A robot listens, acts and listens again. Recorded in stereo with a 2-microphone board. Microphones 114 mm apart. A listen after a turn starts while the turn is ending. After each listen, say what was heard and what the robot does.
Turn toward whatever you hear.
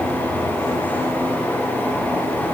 Keep listening.
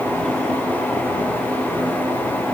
Keep listening.
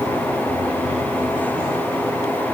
I can't make out anything to turn to.